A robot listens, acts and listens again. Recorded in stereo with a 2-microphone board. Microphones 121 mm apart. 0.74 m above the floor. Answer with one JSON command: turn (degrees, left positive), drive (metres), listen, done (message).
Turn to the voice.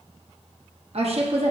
{"turn": -55}
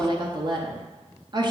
{"turn": -45}
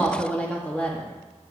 {"turn": 10}
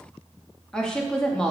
{"done": "Facing the woman speaking."}